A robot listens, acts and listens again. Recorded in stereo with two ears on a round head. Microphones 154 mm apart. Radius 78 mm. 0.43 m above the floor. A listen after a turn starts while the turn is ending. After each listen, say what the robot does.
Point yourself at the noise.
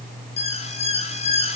Turn 35° left.
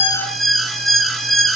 Facing the alarm, 2 to 4 m away.